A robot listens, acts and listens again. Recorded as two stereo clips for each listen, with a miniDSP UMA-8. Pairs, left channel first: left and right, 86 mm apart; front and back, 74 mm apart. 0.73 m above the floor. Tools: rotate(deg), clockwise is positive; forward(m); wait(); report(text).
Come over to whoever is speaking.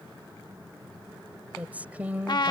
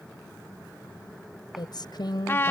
rotate(15)
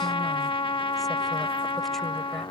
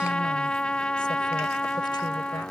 wait()
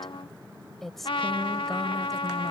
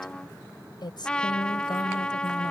forward(1.0)
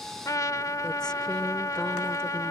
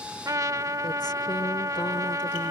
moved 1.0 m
wait()
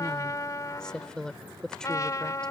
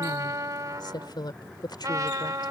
rotate(-10)
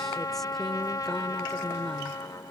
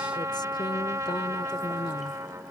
wait()
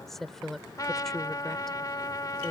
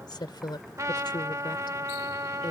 forward(1.0)
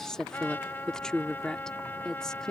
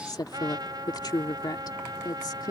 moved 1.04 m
rotate(-10)
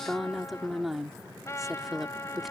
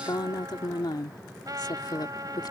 forward(1.0)
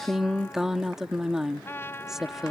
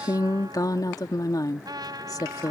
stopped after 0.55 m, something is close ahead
report("Arrived at the woman speaking, straight ahead.")